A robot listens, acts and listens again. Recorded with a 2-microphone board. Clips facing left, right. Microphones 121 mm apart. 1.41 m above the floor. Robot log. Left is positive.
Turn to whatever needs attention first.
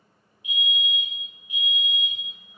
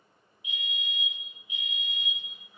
note: The fire alarm: about 40° left or 140° left.
cmd yaw +40
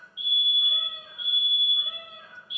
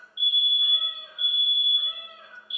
end: Facing the fire alarm, 1 to 2 m away.